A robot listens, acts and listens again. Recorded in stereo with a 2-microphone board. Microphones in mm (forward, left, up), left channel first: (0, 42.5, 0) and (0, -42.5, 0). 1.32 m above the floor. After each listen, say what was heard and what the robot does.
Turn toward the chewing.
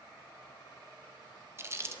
The chewing: about 30° right or 150° right. Turn 30° right.
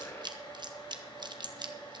So it is at 120° right. Turn 120° right.
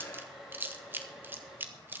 The chewing is now 25° right. Turn 25° right.
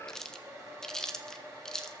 Found it: chewing, straight ahead, 1 to 2 m away.